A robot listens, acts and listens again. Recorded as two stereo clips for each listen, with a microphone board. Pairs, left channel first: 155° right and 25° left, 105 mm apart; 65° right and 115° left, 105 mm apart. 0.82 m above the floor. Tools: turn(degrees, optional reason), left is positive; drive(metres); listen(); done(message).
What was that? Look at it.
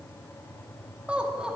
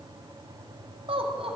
turn(degrees=105, reason="The laughter: 105° left.")
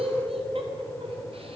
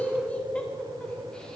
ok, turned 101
turn(degrees=15, reason="The laughter is now 15° left.")
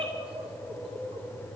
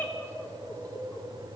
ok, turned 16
done("Facing the laughter, 2 to 4 m away.")